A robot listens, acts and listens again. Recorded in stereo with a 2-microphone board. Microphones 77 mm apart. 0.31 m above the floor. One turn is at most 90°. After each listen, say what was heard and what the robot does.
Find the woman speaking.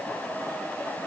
Keep listening.
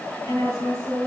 The woman speaking: about 60° left or 120° left. Turn 60° left.
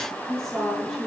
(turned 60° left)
Found it: a woman speaking, straight ahead.